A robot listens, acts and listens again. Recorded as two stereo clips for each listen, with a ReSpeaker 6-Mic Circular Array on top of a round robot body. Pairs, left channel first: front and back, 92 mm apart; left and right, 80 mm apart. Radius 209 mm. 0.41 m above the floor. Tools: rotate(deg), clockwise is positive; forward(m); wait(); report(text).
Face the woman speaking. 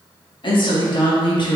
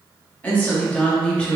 rotate(-15)
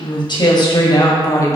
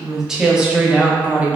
rotate(30)
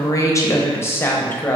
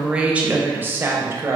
rotate(65)
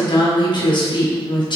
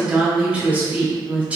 rotate(20)
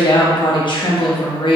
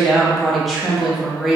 report("Facing the woman speaking, 1 to 2 m away.")